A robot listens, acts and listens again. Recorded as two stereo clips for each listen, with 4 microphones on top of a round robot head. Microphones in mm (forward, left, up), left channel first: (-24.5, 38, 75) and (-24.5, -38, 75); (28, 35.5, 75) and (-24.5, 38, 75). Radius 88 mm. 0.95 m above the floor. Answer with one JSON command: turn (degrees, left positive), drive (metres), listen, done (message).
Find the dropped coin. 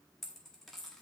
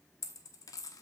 {"done": "Found it: a dropped coin, straight ahead."}